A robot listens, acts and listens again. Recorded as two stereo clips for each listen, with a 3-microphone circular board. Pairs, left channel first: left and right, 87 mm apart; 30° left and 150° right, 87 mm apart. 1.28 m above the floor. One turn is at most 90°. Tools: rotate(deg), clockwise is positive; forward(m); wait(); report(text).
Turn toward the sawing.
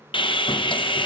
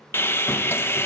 rotate(-90)
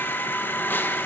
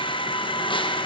rotate(-25)
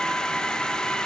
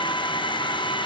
rotate(-10)
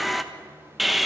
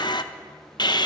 report("Facing the sawing.")